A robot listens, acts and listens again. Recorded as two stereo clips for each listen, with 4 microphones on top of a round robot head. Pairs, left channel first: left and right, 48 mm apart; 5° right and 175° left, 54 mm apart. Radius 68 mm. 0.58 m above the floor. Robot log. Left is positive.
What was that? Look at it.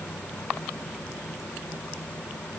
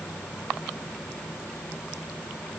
cmd idle
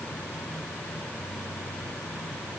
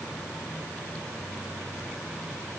cmd idle
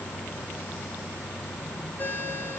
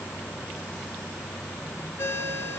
note: The ringtone: 35° left.
cmd yaw +35
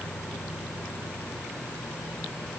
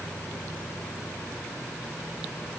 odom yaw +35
cmd idle
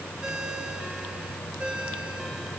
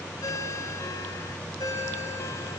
note: The ringtone is now 20° right.
cmd yaw -20
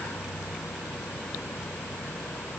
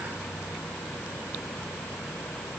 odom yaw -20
cmd idle
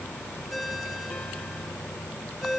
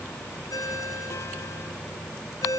end: Found it: a ringtone, straight ahead, 2 to 4 m away.